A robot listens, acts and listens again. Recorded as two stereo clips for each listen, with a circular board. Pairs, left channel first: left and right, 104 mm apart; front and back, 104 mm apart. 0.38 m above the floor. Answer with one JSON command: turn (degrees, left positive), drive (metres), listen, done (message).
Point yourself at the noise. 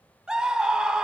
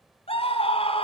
{"turn": -10}
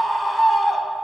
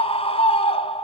{"done": "Facing the scream."}